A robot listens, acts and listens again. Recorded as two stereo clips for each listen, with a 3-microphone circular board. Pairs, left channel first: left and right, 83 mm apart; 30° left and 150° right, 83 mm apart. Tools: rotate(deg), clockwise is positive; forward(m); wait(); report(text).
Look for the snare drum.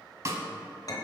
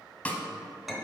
rotate(40)
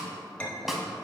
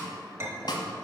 report("Facing the snare drum.")